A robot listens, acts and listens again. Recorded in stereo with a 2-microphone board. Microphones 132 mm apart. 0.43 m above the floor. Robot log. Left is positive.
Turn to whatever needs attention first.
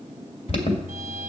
note: The alarm: about 50° left or 130° left.
cmd yaw +50
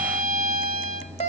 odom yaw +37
note: So it is at 75° left.
cmd yaw +75
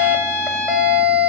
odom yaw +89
note: The alarm is now 10° right.
cmd yaw -10
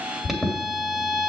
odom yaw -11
end: Found it: an alarm, straight ahead.